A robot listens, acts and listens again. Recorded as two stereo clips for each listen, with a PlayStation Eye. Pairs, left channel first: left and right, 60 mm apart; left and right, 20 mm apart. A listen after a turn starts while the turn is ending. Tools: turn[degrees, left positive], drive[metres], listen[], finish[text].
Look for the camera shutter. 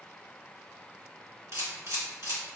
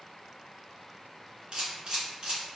Thought: The camera shutter: about 55° right or 125° right.
Action: turn[-55]
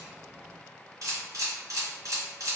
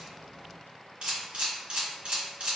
Thought: So it is at 70° right.
Action: turn[-70]
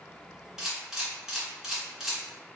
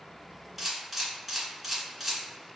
Thought: The camera shutter is now 10° right.
Action: turn[-10]
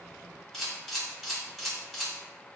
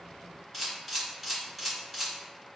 Action: finish[Facing the camera shutter, 1 to 2 m away.]